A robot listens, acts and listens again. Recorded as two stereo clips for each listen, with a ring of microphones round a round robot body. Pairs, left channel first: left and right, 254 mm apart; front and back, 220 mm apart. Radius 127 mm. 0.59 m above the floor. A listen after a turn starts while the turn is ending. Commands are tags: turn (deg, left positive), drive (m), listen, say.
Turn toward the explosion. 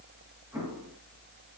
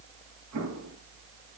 <turn deg="-175"/>
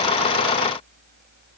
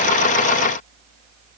<say>Facing where the explosion came from. I can't hear it now.</say>